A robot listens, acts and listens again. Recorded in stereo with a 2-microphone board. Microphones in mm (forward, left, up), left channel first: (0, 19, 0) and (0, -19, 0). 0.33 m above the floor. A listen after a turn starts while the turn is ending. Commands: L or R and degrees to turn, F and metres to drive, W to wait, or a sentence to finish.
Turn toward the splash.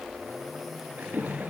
R50
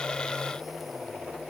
W
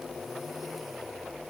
I heard a splash, but can't make it out now. It was about straight ahead or 80° right.